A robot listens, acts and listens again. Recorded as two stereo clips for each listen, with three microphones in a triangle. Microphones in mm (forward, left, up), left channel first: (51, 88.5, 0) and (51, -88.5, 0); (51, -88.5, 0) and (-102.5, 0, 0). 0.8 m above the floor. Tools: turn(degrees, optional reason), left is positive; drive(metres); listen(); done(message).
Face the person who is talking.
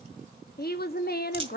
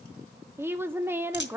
turn(degrees=75, reason="The woman speaking: 75° left.")
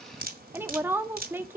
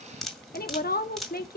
turn(degrees=-15, reason="The woman speaking is now 15° right.")
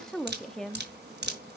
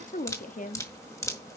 done("Found it: a woman speaking, straight ahead.")